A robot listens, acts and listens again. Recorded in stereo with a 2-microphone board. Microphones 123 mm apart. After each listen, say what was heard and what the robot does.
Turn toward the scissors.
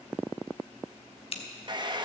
The scissors: about 50° left or 130° left. Turn 50° left.
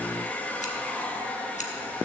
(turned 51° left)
Keep listening.
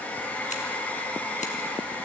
Keep listening.
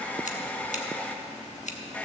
So it is at 80° left. Turn 80° left.
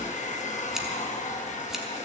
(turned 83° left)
Keep listening.
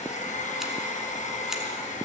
Keep listening.
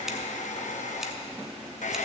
Facing where the scissors came from. I can't hear it now.